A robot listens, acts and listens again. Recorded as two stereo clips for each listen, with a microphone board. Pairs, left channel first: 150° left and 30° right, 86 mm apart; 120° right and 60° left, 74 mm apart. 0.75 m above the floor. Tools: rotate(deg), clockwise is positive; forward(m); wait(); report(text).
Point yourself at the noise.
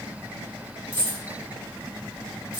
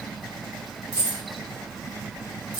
rotate(-90)
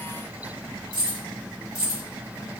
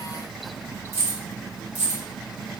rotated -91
report("Found it: keys jangling, straight ahead.")